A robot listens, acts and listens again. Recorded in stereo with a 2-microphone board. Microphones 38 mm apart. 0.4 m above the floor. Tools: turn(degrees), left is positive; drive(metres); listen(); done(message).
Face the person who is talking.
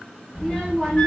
turn(degrees=30)
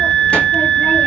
listen()
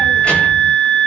listen()
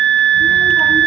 done("I heard a child speaking, but can't make it out now. It was about 20° right or 140° left.")